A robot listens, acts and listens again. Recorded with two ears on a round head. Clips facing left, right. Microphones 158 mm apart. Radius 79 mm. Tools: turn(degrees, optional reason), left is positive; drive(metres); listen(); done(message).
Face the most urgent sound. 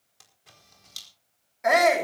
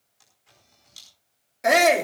turn(degrees=-40, reason="The shout: about 40° right or 140° right.")
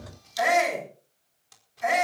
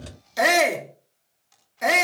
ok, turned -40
turn(degrees=-100, reason="So it is at 100° right.")
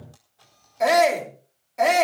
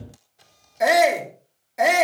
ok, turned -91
turn(degrees=-10, reason="The shout is now 10° right.")
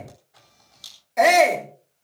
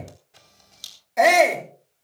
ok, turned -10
done("Facing the shout, 2 to 4 m away.")